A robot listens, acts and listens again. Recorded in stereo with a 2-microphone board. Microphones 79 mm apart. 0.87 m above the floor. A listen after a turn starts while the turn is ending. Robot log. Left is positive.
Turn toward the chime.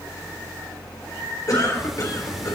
cmd idle
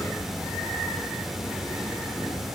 cmd idle
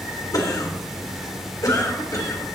end: I can't make out a chime, only a cough and ticking.